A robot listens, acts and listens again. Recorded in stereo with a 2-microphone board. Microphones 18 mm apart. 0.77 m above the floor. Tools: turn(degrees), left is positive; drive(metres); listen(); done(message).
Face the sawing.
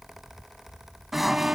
turn(degrees=-30)
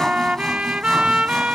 listen()
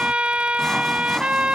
listen()
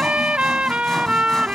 done("I heard sawing, but can't make it out now. It was about 25° left or 145° right.")